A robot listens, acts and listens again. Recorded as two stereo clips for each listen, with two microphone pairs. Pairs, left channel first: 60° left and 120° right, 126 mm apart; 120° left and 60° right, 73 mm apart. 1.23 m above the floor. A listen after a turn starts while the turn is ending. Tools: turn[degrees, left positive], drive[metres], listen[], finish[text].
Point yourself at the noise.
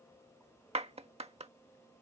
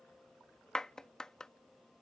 Thought: The clap: 160° right.
Action: turn[-160]
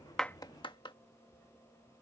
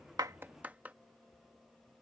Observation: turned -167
Thought: The clap is now 10° left.
Action: turn[10]
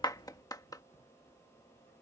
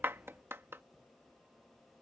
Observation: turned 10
Action: finish[Found it: a clap, straight ahead.]